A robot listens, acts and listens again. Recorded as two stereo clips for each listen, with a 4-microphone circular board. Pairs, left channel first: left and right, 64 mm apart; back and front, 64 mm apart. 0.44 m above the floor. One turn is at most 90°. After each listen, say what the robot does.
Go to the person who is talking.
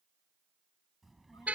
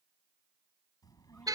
Turn 90° left.
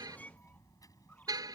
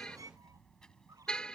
Turn 90° left.
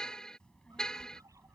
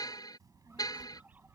Turn 15° left.
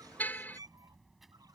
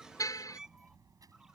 Drive 1.0 m forward.
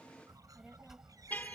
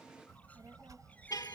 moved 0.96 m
Turn 10° right.
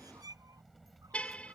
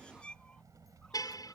Drive 1.0 m forward.
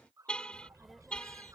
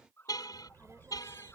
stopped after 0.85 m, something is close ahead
I am next to the child speaking.